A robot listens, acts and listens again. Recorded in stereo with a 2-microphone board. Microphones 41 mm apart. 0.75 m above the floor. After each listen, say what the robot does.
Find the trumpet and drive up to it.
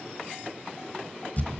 Keep listening.
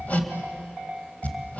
Keep listening.
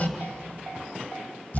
I can't make out a trumpet to turn to.